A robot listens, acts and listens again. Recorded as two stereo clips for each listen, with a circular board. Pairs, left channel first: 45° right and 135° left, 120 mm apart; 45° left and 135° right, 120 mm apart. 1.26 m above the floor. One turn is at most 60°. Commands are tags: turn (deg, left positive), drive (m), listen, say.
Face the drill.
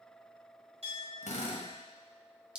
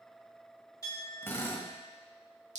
<turn deg="-25"/>
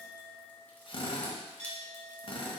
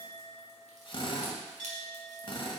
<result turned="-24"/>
<say>Found it: a drill, straight ahead.</say>